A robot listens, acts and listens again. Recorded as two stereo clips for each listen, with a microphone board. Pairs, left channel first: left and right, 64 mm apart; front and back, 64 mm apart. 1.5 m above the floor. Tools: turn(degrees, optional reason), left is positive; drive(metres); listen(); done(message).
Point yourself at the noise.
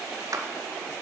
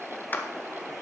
turn(degrees=-60, reason="The clap: 60° right.")
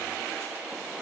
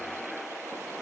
listen()
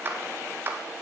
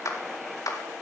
turn(degrees=-35, reason="The clap is now 35° right.")
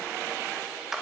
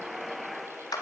done("Found it: a clap, straight ahead.")